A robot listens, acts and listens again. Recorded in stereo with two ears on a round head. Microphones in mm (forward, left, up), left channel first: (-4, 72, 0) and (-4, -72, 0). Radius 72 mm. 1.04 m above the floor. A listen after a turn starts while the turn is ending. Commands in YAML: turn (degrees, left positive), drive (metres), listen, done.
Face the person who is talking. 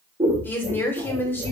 turn: 30
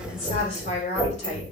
turn: 135
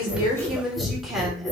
done: "Facing the woman speaking, 2 to 4 m away."